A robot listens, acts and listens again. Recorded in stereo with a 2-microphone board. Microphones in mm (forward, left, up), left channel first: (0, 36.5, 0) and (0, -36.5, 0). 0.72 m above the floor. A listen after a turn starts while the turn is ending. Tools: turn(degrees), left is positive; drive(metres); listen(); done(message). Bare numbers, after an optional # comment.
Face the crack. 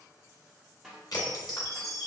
# The crack: about 65° left or 115° left.
turn(65)
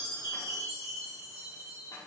listen()
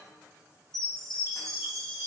done("I heard a crack, but can't make it out now. It was about straight ahead or 50° left.")